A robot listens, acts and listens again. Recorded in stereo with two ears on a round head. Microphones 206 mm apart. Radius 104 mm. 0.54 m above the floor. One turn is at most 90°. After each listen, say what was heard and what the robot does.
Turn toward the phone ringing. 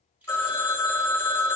Turn 30° left.
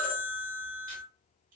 So it is at 140° left. Turn 90° left.
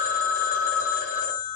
The phone ringing is now 80° left. Turn 80° left.
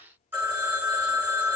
The phone ringing is now 10° right. Turn 10° right.
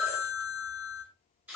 Found it: a phone ringing, straight ahead.